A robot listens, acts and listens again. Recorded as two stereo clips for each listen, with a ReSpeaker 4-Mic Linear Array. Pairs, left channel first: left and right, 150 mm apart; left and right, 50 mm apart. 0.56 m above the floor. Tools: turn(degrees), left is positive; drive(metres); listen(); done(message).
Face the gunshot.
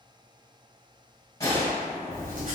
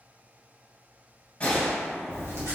turn(degrees=25)
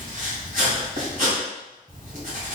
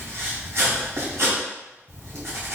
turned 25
listen()
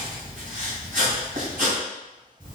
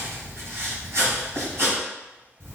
done("I heard a gunshot, but can't make it out now. It was about straight ahead or 130° left.")